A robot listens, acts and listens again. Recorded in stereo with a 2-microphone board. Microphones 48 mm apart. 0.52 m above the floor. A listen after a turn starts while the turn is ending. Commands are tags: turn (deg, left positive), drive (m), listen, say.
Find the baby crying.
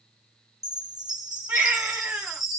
<turn deg="-45"/>
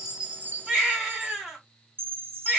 <turn deg="-10"/>
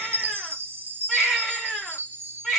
<say>Found it: a baby crying, straight ahead.</say>